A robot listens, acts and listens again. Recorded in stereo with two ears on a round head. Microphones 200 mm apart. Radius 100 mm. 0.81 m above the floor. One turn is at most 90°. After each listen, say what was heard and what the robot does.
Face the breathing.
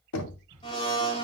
The breathing: about 20° right or 160° right. Turn 20° right.
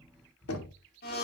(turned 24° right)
Facing the breathing.